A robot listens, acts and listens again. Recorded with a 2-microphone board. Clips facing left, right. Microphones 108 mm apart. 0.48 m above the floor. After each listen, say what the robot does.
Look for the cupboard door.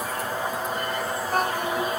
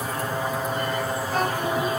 Keep listening.
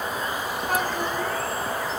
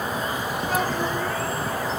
Keep listening.
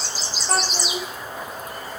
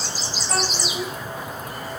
I can't make out a cupboard door to turn to.